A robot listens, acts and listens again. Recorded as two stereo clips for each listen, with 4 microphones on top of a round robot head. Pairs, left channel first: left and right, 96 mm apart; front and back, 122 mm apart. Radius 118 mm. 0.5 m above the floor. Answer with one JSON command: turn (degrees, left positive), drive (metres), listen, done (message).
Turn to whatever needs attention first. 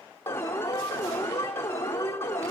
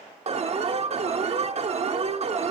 {"turn": 150}
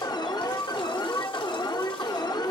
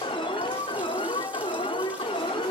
{"turn": 45}
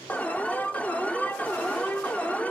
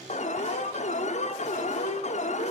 {"turn": 15}
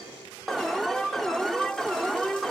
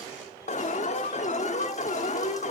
{"done": "Found it: an alarm, straight ahead, under 1 m away."}